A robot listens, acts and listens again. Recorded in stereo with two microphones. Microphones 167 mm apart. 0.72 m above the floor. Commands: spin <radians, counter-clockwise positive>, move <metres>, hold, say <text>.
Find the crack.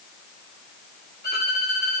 hold
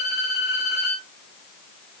hold
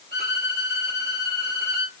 say I can't make out a crack, only a violin.